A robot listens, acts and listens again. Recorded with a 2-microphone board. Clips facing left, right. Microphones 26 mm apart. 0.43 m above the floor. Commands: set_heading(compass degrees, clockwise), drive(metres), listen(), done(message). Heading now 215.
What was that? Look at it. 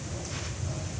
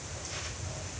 listen()
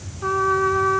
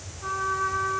set_heading(190)
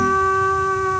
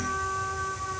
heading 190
set_heading(60)
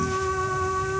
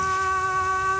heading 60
set_heading(85)
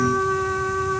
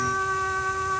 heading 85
done("Found it: a trumpet, straight ahead.")